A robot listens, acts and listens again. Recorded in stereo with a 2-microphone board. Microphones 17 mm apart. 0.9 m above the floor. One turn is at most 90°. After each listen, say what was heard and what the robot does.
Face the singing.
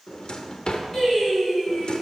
Turn 30° left.
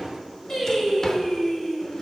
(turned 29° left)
The singing: about 20° left or 160° left. Turn 20° left.
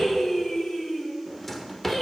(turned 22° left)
The singing: about 20° left or 160° left. Turn 20° left.
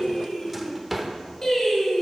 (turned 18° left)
So it is at 150° left. Turn 90° left.
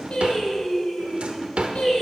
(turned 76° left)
The singing is now 70° left. Turn 70° left.
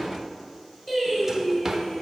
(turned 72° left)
Facing the singing, 2 to 4 m away.